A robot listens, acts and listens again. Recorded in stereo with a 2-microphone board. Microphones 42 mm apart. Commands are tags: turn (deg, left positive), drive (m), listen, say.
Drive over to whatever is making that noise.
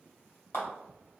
<turn deg="65"/>
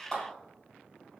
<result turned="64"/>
<turn deg="15"/>
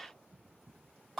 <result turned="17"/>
<drive m="1.0"/>
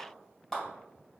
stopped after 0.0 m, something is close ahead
<say>Something is in my way. I am facing the clap but have not reached it.</say>